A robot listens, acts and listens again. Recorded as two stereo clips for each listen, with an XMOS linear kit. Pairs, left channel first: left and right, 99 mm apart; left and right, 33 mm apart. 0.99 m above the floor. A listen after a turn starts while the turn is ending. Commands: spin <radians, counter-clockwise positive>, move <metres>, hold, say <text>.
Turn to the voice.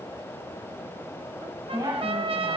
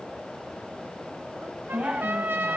spin -0.87
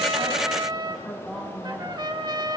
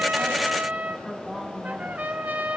say Facing the woman speaking.